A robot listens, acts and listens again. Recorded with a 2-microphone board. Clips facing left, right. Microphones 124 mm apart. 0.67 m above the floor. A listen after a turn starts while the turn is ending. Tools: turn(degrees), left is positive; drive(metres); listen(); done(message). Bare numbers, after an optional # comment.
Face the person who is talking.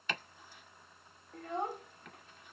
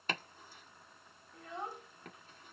# The child speaking: about 55° left or 125° left.
turn(55)
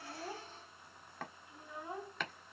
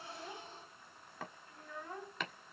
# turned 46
# So it is at 20° left.
turn(20)
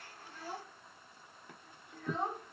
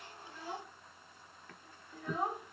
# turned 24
done("Found it: a child speaking, straight ahead.")